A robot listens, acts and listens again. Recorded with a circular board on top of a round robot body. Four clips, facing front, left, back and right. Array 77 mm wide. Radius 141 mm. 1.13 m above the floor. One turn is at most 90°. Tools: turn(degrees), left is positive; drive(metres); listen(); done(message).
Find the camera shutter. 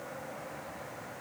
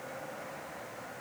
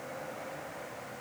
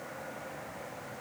listen()
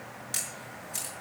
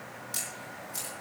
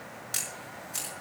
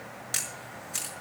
turn(degrees=-90)
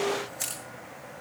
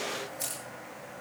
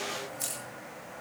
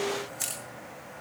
turn(degrees=-40)
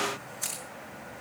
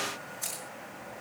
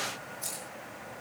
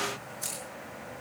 done("Facing the camera shutter, over 4 m away.")